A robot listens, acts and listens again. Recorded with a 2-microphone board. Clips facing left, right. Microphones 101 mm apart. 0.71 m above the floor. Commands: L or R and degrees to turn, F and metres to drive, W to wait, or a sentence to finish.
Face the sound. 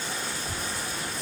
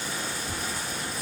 L60
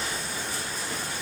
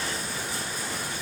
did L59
W
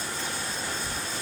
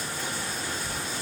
L50
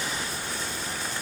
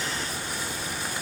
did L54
W
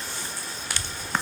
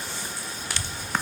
R20
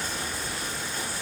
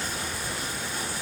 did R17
R10
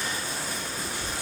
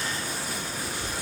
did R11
Found it: a child speaking, straight ahead.